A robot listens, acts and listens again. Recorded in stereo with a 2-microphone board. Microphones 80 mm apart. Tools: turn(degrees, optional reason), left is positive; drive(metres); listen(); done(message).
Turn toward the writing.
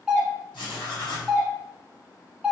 turn(degrees=90)
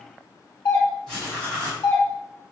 turn(degrees=10, reason="So it is at 10° left.")
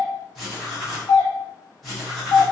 done("Facing the writing, 1 to 2 m away.")